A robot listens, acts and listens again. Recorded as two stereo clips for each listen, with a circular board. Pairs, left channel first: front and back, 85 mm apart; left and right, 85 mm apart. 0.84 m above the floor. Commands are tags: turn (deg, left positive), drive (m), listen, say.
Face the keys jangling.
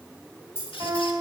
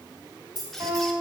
<turn deg="-60"/>
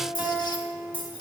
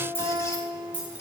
<turn deg="-15"/>
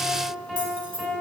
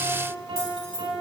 <say>Facing the keys jangling, 2 to 4 m away.</say>